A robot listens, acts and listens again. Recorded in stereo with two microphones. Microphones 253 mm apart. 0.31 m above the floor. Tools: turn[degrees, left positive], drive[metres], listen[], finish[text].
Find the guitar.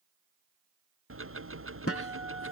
Thought: The guitar: about 65° left or 115° left.
Action: turn[65]
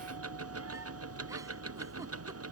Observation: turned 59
Action: listen[]
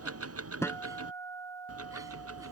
Thought: So it is at 10° left.
Action: turn[10]
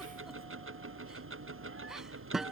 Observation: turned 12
Action: finish[Found it: a guitar, straight ahead.]